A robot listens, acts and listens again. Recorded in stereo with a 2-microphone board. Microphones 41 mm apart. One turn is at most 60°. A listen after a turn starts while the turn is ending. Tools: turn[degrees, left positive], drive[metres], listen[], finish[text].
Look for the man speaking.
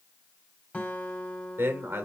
Thought: The man speaking: about 75° right or 105° right.
Action: turn[-60]
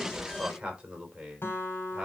Thought: So it is at 15° right.
Action: turn[-15]
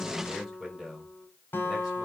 Action: finish[Found it: a man speaking, straight ahead, over 4 m away.]